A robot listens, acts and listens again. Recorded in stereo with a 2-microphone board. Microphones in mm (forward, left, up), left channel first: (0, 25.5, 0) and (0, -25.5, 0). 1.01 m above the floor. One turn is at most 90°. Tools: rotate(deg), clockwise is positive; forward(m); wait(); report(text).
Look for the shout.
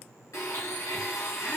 wait()
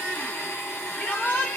rotate(-30)
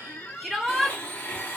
report("Facing the shout, 1 to 2 m away.")